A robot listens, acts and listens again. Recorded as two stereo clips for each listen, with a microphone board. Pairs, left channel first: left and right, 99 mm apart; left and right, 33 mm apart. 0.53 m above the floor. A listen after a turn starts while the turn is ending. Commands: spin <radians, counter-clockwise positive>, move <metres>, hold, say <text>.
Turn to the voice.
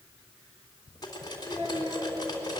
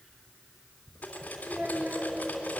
spin -1.22
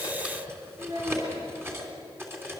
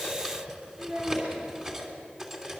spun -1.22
spin -0.79
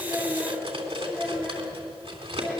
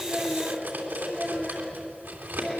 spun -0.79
say Facing the child speaking, over 4 m away.